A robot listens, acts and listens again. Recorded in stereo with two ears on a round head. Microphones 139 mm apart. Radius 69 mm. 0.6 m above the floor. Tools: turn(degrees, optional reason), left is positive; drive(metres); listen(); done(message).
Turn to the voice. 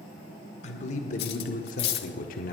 turn(degrees=60, reason="The man speaking: about 60° left or 120° left.")
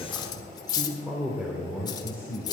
turn(degrees=-20, reason="So it is at 20° right.")
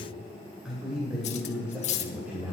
turn(degrees=-10, reason="The man speaking is now 10° right.")
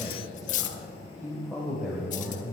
done("Found it: a man speaking, straight ahead, 2 to 4 m away.")